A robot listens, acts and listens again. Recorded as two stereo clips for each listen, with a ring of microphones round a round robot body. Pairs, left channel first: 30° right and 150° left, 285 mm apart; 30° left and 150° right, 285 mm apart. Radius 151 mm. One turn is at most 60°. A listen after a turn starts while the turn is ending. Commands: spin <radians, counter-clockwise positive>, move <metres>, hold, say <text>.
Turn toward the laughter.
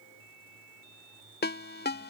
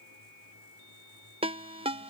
hold
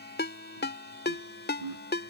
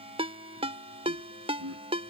spin 1.05
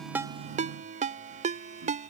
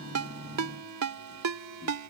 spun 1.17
spin 1.05
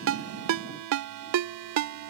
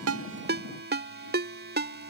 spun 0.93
spin 0.70
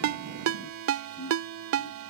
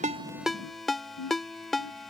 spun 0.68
say Found it: laughter, straight ahead.